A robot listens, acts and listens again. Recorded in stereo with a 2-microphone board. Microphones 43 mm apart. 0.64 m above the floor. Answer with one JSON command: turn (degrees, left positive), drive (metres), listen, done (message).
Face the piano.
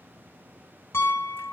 {"turn": 70}
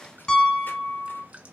{"turn": 15}
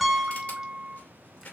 {"done": "Facing the piano, under 1 m away."}